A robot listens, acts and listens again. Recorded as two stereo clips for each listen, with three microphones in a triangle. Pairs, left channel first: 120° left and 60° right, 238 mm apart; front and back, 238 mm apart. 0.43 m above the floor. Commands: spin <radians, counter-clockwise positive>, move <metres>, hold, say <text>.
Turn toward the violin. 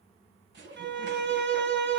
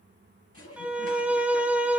spin -1.66
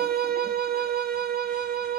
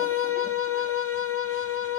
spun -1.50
spin -0.17
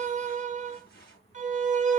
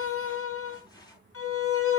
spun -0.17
say Facing the violin.